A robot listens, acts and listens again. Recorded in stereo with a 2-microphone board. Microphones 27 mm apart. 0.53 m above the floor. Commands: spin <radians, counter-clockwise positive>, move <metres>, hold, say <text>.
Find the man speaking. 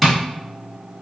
hold
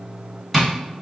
hold
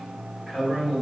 spin 0.52
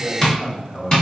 spin 2.71
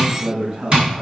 spin -0.52
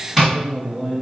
say Facing the man speaking, 2 to 4 m away.